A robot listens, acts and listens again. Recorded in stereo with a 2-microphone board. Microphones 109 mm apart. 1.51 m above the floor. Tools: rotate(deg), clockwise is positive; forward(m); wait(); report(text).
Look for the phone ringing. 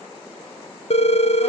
rotate(-65)
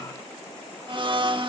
wait()
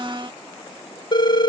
rotate(-45)
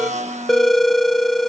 report("Facing the phone ringing.")